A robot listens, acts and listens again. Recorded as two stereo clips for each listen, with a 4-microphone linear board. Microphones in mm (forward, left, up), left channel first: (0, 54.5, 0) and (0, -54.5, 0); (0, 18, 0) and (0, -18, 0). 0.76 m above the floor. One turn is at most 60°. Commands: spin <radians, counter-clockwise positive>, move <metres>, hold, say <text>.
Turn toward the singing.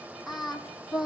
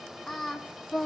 spin -0.52
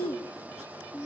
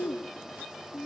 spin -1.05
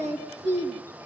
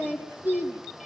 spin -1.05
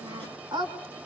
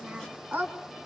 spin -0.79
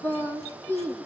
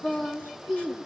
spin 0.26
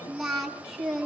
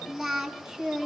say Facing the singing, 2 to 4 m away.